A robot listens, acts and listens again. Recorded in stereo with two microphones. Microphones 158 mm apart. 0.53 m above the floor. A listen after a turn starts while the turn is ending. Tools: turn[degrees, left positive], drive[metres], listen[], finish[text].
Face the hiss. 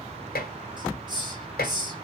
Thought: The hiss: about 30° right or 150° right.
Action: turn[-30]
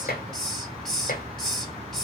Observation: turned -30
Action: finish[Found it: a hiss, straight ahead.]